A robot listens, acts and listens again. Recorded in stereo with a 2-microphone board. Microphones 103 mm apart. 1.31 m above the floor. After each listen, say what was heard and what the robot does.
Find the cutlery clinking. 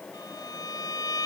Keep listening.
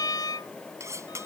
The cutlery clinking: about 30° right or 150° right. Turn 30° right.
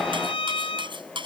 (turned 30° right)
So it is at 120° right. Turn 120° right.
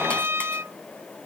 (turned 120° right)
Keep listening.
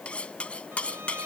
The cutlery clinking is now 10° left. Turn 10° left.
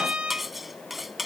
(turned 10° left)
Found it: cutlery clinking, straight ahead.